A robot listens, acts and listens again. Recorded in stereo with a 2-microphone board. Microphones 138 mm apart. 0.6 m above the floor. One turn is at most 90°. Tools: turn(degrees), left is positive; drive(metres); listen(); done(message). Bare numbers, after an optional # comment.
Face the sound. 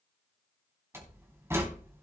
# The door slam: about 20° right or 160° right.
turn(-20)
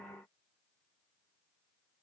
listen()
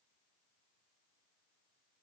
done("I heard a door slam, but can't make it out now. It was about straight ahead or 140° right.")